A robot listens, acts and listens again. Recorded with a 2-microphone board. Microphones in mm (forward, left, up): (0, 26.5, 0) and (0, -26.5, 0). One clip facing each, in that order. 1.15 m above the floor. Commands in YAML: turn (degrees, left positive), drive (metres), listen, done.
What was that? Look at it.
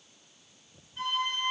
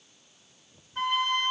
turn: -65
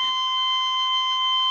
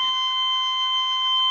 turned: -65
turn: -35
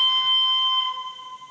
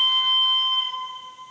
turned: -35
done: "Facing the flute."